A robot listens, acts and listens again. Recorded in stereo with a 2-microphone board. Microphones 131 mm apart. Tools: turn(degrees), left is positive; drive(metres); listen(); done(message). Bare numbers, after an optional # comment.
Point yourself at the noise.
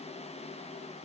listen()
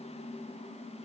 listen()
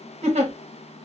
# The giggle: about 50° right or 130° right.
turn(-50)
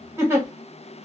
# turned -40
# So it is at 20° right.
turn(-20)
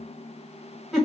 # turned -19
done("Facing the giggle.")